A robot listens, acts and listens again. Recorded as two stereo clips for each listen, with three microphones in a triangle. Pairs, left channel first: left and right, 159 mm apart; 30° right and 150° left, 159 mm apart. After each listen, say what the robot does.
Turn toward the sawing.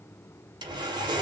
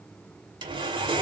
Turn 150° right.
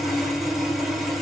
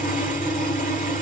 Found it: sawing, straight ahead, 1 to 2 m away.